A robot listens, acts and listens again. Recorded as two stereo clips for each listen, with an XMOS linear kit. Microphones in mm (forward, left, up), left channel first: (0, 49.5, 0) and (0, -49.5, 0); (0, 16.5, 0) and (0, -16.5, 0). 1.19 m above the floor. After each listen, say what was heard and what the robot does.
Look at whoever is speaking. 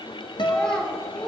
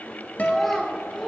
Turn 30° left.
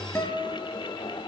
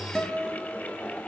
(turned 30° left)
Keep listening.
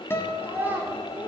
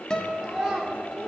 So it is at 20° right. Turn 20° right.
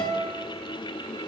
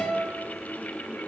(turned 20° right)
Keep listening.
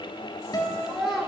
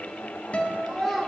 Found it: a child speaking, straight ahead, 2 to 4 m away.